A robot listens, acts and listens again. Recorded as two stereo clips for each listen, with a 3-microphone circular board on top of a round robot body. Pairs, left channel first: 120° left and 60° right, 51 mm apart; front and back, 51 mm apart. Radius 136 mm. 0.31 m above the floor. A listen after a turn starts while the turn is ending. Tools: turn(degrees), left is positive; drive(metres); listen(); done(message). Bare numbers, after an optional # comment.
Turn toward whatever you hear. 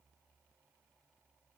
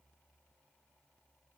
listen()
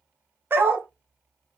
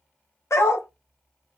# The dog barking: 15° right.
turn(-15)
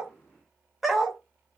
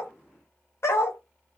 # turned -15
# The dog barking is now 30° left.
turn(30)
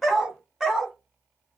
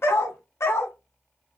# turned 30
# The dog barking is now 25° left.
turn(25)
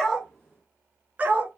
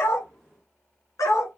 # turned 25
done("Facing the dog barking, 2 to 4 m away.")